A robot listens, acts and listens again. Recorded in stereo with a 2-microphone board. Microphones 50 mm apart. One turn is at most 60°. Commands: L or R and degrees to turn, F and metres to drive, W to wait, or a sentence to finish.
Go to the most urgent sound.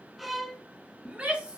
R20
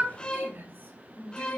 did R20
R60
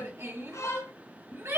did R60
R60
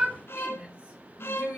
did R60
R30
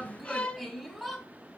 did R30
F1.0
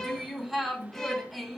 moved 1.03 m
F1.0
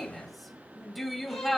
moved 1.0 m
F1.0
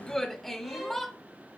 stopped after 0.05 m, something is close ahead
L10
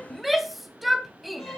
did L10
I am next to the shout.